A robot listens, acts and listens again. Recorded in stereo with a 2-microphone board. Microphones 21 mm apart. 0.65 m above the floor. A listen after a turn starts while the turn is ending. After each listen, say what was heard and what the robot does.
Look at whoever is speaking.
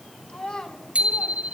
The child speaking: about 45° left or 135° left. Turn 45° left.
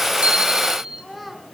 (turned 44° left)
Found it: a child speaking, straight ahead, over 4 m away.